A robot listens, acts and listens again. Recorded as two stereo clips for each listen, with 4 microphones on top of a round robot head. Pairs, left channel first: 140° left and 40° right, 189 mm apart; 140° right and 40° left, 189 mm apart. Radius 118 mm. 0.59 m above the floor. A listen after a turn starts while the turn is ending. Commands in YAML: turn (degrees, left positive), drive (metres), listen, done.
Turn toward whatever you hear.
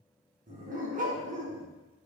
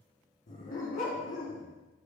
turn: -90
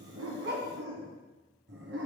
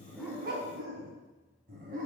turn: -10
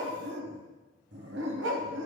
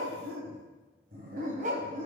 turn: -20
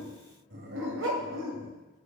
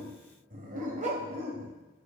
turn: -20
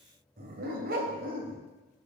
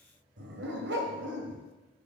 done: "Facing the dog barking."